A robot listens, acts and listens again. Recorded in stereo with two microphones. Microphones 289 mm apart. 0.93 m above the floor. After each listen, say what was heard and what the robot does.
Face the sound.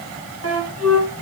The flute: about 50° right or 130° right. Turn 50° right.
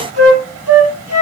So it is at 70° right. Turn 70° right.
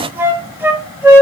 The flute is now 10° right. Turn 10° right.
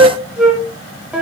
Found it: a flute, straight ahead, 1 to 2 m away.